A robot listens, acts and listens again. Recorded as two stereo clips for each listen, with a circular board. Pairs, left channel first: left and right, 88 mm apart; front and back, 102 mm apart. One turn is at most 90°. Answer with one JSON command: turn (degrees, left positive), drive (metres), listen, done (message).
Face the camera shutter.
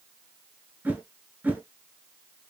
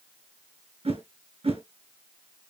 {"listen": true}
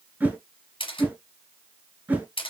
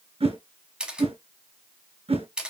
{"turn": 90}
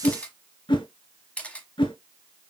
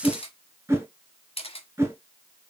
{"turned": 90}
{"turn": 15}
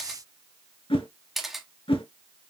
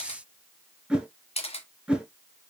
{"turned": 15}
{"done": "Found it: a camera shutter, straight ahead."}